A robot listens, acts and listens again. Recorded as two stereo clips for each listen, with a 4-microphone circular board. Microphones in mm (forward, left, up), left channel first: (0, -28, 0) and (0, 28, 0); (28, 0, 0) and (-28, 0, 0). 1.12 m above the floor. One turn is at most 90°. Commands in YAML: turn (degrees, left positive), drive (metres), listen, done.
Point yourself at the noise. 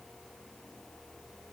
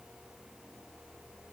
listen: true
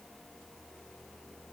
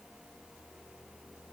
listen: true
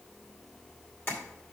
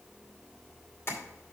turn: -45
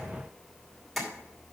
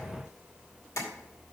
done: "Found it: tapping, straight ahead."